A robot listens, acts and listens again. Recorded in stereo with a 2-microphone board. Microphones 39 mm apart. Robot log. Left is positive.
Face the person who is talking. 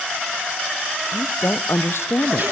cmd yaw +90
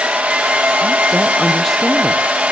cmd idle
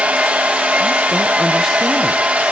cmd idle
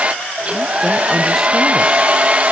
end: I heard a woman speaking from this way, but can't make it out now.